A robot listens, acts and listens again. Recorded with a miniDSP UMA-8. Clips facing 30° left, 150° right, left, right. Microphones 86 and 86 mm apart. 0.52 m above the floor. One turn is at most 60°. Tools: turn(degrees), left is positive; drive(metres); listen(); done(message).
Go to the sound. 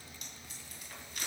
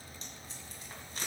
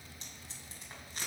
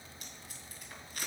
turn(degrees=60)
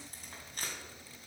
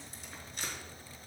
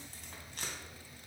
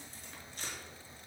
turn(degrees=60)
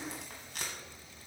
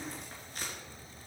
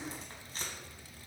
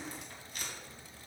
turn(degrees=35)
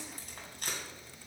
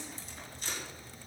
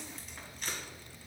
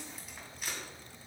drive(metres=1.0)
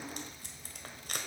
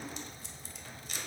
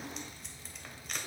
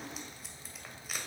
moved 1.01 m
drive(metres=1.0)
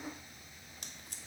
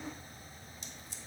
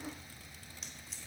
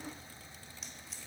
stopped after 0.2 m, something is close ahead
listen()
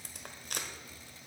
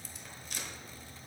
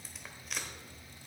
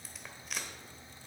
done("I am next to the tape being pulled.")